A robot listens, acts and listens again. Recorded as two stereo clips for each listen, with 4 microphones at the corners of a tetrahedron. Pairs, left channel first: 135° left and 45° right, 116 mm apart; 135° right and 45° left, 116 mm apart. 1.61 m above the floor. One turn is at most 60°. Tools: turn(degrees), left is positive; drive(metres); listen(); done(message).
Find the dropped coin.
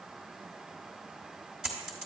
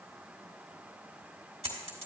turn(degrees=40)
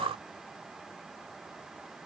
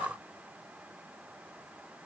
done("I heard a dropped coin from this way, but can't make it out now.")